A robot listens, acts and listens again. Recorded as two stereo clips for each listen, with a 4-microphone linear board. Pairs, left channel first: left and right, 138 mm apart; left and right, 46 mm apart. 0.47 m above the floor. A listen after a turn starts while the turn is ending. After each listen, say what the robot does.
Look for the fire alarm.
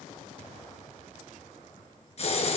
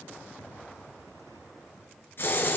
Keep listening.
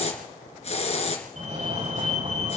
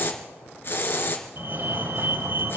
Turn 60° right.
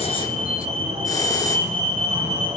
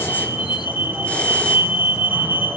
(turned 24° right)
Turn 70° right.
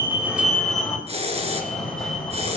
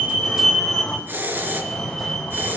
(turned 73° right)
Facing the fire alarm, over 4 m away.